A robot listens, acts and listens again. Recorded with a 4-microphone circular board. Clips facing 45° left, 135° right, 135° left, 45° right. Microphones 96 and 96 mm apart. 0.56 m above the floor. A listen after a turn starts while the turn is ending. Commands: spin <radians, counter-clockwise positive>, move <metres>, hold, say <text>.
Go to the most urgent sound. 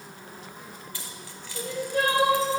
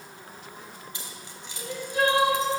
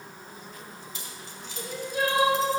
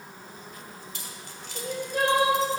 move 1.0
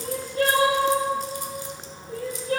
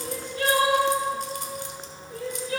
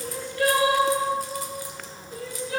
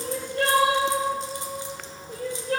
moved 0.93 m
move 1.0
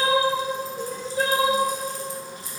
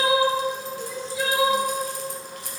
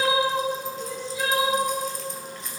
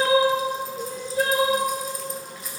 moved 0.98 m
move 1.0
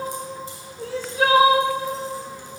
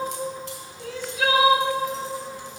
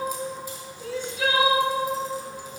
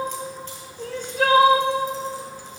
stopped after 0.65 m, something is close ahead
say I am next to the crying.